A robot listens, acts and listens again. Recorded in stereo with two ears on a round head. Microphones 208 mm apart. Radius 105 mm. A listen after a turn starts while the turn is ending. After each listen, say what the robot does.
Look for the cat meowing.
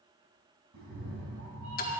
Turn 70° right.
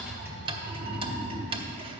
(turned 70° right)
Turn 55° right.
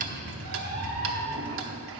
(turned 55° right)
Turn 20° right.
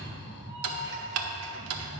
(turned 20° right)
Facing the cat meowing, over 4 m away.